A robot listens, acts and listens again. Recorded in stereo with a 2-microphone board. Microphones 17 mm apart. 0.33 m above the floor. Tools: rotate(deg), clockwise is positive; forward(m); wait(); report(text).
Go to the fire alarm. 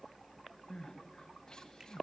wait()
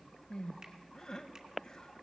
wait()
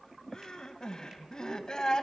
report("I can't make out a fire alarm to turn to.")